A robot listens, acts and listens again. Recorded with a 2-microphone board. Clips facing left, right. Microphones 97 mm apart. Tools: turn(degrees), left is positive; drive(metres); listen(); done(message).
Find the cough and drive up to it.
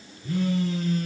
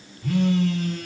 listen()
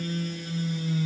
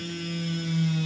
listen()
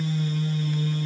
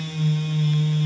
done("I can't make out a cough, only a phone buzzing.")